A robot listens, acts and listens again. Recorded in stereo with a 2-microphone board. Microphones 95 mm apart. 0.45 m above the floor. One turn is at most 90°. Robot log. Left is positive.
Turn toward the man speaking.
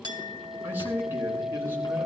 note: The man speaking: about 25° right or 155° right.
cmd yaw -25
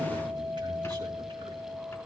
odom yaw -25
cmd idle
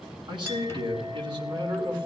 note: So it is at 120° right.
cmd yaw -90
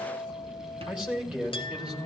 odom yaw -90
note: The man speaking is now 10° right.
cmd yaw -10
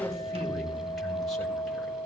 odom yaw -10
end: Facing the man speaking, 2 to 4 m away.